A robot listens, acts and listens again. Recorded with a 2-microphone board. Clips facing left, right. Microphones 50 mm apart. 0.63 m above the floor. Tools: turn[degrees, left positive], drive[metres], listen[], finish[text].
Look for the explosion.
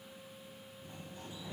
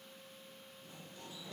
Action: listen[]
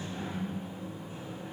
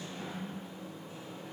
Action: listen[]
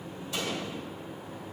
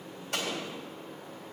Thought: The explosion: about 60° right or 120° right.
Action: turn[-60]
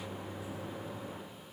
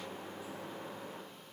Action: listen[]
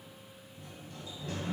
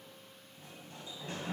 Action: finish[I heard an explosion, but can't make it out now. It was about straight ahead or 60° right.]